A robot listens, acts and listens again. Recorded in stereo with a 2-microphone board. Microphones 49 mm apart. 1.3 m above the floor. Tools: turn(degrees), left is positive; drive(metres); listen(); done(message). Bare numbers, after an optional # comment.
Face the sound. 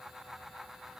listen()
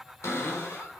# The cupboard door: about 70° left or 110° left.
turn(70)
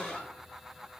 # So it is at 15° left.
turn(15)
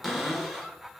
done("Facing the cupboard door.")